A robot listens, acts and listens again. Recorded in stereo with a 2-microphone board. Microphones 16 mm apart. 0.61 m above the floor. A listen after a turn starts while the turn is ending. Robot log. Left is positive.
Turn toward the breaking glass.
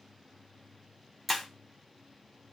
cmd yaw -30
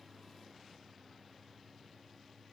cmd idle
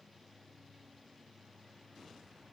end: I heard breaking glass, but can't make it out now. It was about 25° left or 145° right.